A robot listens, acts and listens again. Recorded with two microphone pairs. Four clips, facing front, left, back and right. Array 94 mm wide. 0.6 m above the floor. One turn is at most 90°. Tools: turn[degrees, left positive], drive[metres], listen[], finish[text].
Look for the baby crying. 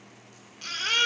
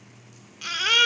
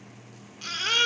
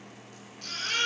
Thought: The baby crying: 95° left.
Action: turn[90]
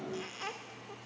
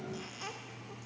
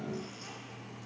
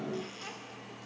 Action: listen[]
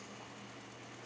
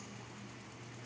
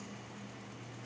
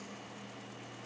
Action: listen[]
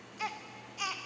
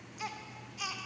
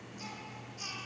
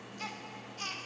Thought: The baby crying is now 10° left.
Action: turn[10]
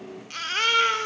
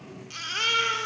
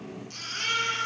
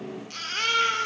Action: finish[Facing the baby crying.]